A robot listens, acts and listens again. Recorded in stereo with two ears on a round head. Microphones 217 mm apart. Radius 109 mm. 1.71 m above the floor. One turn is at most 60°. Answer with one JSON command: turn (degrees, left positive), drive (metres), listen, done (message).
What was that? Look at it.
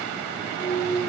{"turn": 30}
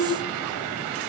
{"turn": 60}
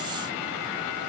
{"turn": 60}
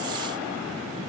{"turn": 15}
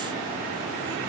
{"done": "I heard a clunk from this way, but can't make it out now."}